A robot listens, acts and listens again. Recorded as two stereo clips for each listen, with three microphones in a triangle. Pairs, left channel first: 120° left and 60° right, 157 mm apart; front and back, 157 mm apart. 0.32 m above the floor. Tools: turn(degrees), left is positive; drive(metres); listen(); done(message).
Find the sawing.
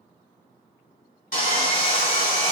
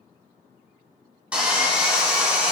turn(degrees=95)
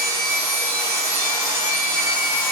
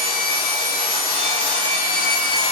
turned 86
turn(degrees=10)
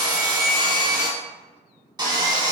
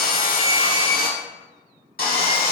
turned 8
done("Facing the sawing, under 1 m away.")